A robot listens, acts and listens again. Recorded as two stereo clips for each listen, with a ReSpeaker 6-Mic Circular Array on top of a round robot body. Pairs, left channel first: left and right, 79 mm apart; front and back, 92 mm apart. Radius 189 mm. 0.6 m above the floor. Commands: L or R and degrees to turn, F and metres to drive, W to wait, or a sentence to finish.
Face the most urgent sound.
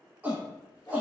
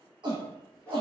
R160
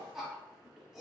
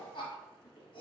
Found it: a shout, straight ahead.